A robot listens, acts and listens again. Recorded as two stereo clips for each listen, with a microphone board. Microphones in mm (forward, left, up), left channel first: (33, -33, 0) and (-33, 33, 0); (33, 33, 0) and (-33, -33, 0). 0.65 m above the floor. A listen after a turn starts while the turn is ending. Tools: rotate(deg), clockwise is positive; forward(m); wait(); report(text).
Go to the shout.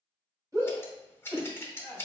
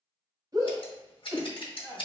rotate(-180)
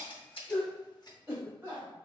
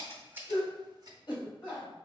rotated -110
rotate(-75)
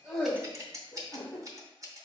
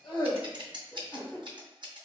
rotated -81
rotate(10)
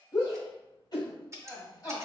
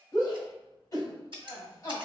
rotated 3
forward(1.0)
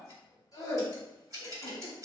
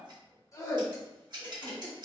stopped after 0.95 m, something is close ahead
report("I am next to the shout.")